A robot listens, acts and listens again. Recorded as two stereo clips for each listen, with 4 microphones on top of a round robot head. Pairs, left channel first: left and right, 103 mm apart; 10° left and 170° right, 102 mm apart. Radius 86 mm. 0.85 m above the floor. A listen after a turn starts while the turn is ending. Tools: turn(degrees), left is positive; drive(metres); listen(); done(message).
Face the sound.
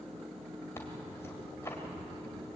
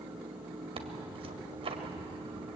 turn(degrees=160)
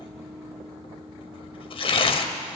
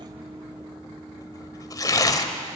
turn(degrees=60)
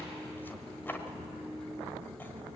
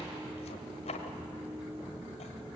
turn(degrees=20)
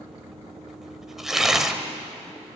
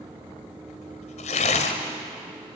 done("Facing the tearing paper, 1 to 2 m away.")